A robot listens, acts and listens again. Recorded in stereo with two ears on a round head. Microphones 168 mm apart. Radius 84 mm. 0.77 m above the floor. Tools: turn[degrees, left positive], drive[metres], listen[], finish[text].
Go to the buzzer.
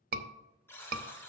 Action: turn[30]
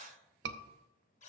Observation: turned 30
Thought: So it is at 140° left.
Action: turn[140]
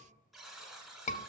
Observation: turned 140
Action: drive[1.0]
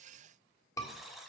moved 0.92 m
Action: drive[1.0]
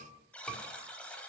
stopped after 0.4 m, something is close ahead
Action: finish[I am next to the buzzer.]